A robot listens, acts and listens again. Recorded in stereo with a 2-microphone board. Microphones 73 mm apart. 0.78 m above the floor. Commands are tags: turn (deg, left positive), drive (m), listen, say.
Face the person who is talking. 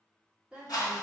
<turn deg="-30"/>
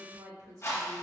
<turn deg="-130"/>
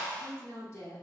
<turn deg="40"/>
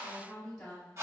<turn deg="10"/>
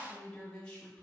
<turn deg="15"/>
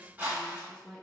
<say>Facing the woman speaking, 2 to 4 m away.</say>